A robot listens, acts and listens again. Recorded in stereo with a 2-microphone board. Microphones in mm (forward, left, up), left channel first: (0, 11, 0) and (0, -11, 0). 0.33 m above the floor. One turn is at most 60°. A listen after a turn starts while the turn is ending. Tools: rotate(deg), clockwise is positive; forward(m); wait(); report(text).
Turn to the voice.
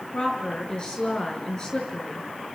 rotate(-35)
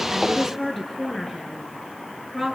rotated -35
report("Facing the woman speaking.")